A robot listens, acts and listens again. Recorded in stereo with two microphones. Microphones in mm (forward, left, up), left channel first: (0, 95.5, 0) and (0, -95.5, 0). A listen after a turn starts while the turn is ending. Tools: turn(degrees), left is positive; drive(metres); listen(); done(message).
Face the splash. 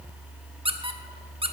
listen()
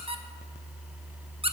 listen()
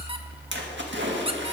turn(degrees=-90)
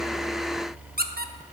done("I heard a splash from this way, but can't make it out now.")